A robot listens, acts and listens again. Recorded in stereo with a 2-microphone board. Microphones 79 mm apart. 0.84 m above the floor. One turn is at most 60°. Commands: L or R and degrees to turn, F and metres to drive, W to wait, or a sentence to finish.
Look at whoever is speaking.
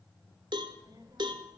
R55
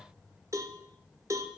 Found it: a child speaking, straight ahead, 1 to 2 m away.